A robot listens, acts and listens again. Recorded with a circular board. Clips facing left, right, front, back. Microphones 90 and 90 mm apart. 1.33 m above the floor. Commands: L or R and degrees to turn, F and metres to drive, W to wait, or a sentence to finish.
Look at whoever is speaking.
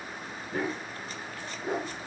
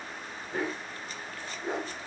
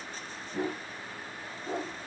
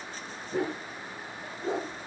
W
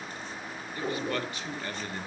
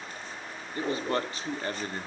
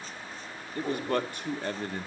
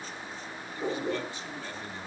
R35
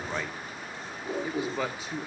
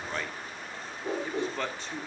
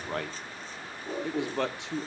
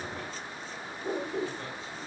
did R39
Facing the man speaking, 1 to 2 m away.